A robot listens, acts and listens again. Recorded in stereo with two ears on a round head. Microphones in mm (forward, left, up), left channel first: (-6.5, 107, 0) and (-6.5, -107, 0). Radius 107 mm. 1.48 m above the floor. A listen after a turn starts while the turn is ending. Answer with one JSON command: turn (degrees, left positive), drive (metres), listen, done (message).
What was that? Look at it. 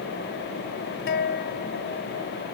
{"turn": 45}
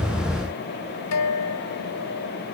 {"turn": 85}
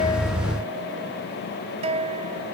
{"turn": -30}
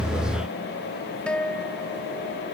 {"done": "Found it: a guitar, straight ahead."}